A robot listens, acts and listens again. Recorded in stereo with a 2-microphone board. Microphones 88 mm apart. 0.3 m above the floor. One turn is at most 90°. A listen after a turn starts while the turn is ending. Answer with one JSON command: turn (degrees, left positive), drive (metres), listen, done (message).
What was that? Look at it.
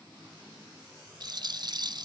{"turn": -55}
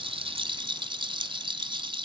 {"turn": -65}
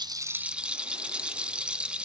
{"turn": -10}
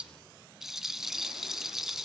{"done": "Found it: a rattle, straight ahead, under 1 m away."}